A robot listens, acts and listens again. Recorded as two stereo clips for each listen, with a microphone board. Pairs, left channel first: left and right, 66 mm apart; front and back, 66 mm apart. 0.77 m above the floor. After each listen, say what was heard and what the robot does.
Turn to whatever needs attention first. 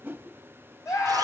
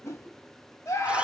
The scream: 50° left. Turn 50° left.
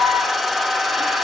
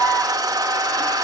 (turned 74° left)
The scream is now 25° right. Turn 25° right.
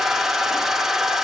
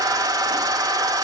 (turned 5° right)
Nothing new. It was at 20° right. Turn 20° right.
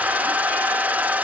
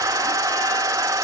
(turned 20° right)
Keep listening.
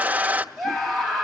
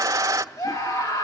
Facing the scream.